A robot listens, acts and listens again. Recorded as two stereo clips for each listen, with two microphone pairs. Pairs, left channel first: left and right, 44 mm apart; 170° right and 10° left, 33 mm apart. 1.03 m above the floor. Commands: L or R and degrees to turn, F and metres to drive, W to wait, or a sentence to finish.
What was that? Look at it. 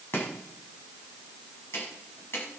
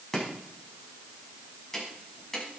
L110
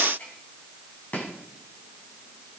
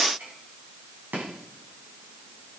L35
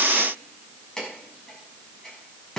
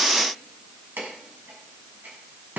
L15
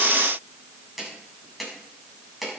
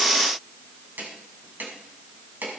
Found it: chopping, straight ahead, over 4 m away.